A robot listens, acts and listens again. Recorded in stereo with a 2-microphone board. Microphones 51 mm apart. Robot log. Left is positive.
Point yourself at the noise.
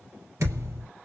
note: The thud: about 70° right or 110° right.
cmd yaw -70
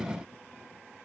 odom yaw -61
cmd idle
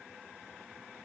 end: I heard a thud, but can't make it out now. It was about 5° right or 50° right.